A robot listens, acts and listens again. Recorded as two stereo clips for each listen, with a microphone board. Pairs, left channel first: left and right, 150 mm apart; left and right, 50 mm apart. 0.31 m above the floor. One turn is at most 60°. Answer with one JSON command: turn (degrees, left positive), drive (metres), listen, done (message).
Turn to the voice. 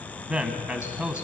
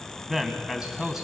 {"turn": -30}
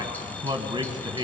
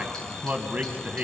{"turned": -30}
{"turn": -60}
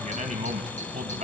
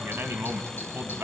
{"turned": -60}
{"turn": -60}
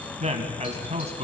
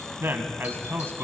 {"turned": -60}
{"turn": -60}
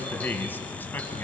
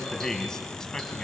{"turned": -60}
{"turn": 15}
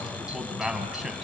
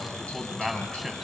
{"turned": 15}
{"done": "Facing the man speaking, 1 to 2 m away."}